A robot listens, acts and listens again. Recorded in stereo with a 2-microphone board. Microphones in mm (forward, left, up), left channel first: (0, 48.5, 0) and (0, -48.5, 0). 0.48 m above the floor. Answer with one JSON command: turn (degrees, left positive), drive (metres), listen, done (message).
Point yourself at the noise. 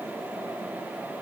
{"listen": true}
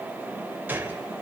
{"turn": -20}
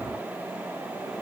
{"listen": true}
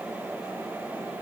{"done": "I heard a gunshot, but can't make it out now. It was about straight ahead or 140° right."}